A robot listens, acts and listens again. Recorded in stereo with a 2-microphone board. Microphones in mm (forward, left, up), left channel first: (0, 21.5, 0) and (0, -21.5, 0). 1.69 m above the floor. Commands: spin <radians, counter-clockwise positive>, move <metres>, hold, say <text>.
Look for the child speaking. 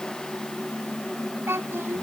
spin -1.57
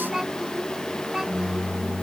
spin -0.26
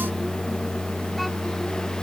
hold
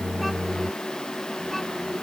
hold
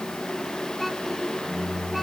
say Facing the child speaking.